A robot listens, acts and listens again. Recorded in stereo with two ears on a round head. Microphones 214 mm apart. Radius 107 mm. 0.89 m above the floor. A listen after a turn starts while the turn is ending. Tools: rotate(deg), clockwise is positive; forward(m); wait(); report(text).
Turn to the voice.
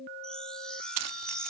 wait()
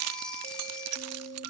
wait()
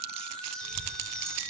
rotate(-60)
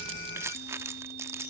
wait()
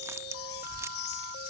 rotate(-55)
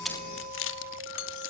wait()
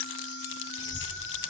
rotate(10)
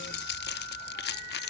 report("Found it: a child speaking, straight ahead, 2 to 4 m away.")